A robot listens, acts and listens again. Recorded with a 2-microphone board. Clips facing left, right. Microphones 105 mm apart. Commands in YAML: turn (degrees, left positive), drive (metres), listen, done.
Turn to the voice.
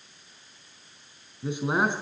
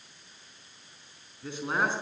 turn: 15
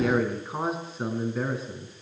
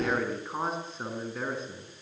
done: "Facing the man speaking."